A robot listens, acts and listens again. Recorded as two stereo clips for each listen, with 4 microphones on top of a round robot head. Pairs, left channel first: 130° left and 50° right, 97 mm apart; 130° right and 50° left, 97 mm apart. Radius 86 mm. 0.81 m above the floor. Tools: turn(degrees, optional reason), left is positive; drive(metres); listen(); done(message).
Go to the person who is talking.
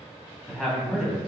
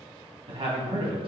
turn(degrees=45, reason="The man speaking: 45° left.")
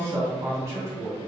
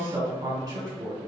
turn(degrees=10, reason="The man speaking is now 10° left.")
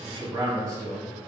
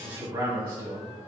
drive(metres=1.0)
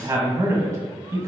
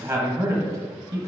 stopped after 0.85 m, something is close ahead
done("Arrived at the man speaking, straight ahead.")